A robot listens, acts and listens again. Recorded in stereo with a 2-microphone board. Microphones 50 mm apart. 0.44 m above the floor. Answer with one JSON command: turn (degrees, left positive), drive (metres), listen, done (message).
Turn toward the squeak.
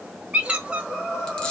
{"turn": -20}
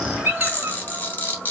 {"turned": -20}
{"turn": -140}
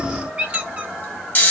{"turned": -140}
{"turn": -30}
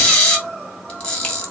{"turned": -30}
{"listen": true}
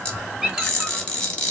{"turn": -20}
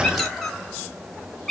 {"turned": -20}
{"done": "Facing the squeak."}